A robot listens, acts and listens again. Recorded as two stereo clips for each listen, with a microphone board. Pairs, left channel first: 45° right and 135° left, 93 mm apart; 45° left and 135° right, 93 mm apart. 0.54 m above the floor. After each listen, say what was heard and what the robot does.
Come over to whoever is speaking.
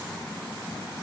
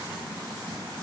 Keep listening.
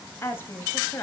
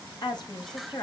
The woman speaking: 15° left. Turn 15° left.
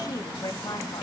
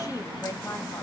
Drive 1.0 m forward.
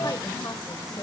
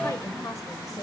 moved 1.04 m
Keep listening.
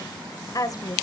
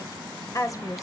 Drive 1.0 m forward.
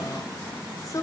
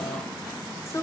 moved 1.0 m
Drive 1.0 m forward.
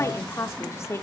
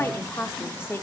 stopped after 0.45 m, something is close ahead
Arrived at the woman speaking, straight ahead.